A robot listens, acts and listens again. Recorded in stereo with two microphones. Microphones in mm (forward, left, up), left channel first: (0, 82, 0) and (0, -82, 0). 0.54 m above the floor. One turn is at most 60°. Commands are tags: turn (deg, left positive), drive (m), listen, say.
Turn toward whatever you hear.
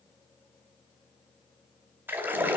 <turn deg="-30"/>
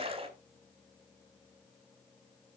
<turn deg="-60"/>
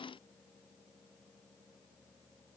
<turn deg="-60"/>
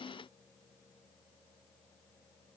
<turn deg="-20"/>
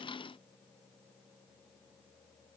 <say>I heard a splash from this way, but can't make it out now.</say>